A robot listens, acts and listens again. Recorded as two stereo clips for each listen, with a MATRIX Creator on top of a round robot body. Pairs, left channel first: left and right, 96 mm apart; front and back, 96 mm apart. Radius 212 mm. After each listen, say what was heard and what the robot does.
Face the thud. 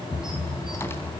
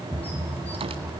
The thud: 65° left. Turn 65° left.
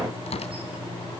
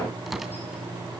I heard a thud from this way, but can't make it out now.